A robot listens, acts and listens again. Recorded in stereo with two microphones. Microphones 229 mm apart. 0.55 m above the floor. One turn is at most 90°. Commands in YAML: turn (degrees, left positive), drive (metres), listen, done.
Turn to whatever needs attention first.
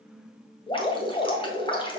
listen: true
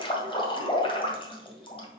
listen: true
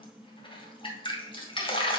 done: "I can't make out anything urgent, only dripping."